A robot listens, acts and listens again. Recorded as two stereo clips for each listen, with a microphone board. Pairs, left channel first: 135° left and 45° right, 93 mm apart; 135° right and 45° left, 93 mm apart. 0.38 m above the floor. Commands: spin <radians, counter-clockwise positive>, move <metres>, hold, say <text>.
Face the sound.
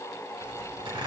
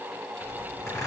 spin -1.31
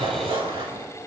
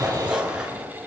spin -0.52
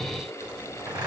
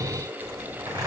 say Facing the zipper, 2 to 4 m away.